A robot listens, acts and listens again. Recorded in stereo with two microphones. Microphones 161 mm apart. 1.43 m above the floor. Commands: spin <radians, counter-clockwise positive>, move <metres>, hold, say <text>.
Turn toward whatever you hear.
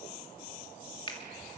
spin 0.52
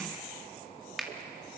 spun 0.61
say Facing the finger snap, 2 to 4 m away.